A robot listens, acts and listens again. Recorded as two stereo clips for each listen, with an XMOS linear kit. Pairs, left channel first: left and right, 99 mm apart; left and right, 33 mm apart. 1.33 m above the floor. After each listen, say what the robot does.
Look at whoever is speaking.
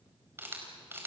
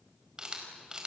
Keep listening.
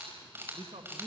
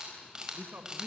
Turn 90° right.
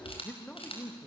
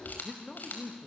Turn 10° left.
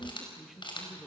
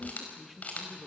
Found it: a man speaking, straight ahead.